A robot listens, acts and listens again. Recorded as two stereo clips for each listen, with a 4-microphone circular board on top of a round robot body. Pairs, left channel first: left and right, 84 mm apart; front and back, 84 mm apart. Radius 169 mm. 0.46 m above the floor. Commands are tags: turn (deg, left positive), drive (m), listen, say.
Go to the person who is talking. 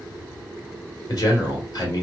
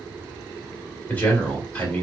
<turn deg="65"/>
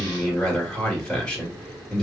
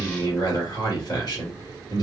<turn deg="15"/>
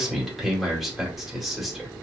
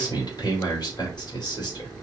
<drive m="1.0"/>
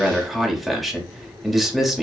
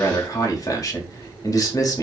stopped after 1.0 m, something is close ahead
<say>I am next to the man speaking.</say>